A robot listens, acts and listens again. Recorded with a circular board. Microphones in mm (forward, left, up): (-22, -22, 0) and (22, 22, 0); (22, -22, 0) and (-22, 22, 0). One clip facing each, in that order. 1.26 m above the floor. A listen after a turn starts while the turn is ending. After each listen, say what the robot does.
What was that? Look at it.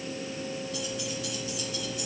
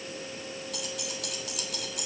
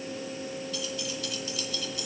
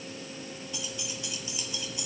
Turn 65° left.
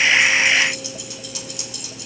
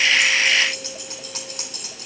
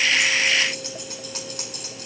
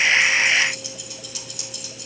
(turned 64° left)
Found it: keys jangling, straight ahead, 2 to 4 m away.